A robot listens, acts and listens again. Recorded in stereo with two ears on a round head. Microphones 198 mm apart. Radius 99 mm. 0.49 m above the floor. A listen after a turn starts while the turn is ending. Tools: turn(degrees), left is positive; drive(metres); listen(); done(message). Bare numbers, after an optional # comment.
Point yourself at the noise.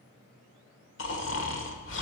# The snoring: about 60° left or 120° left.
turn(60)
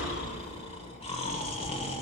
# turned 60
# So it is at 30° left.
turn(30)
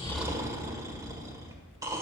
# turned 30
# The snoring is now 20° right.
turn(-20)
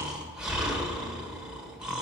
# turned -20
done("Found it: snoring, straight ahead.")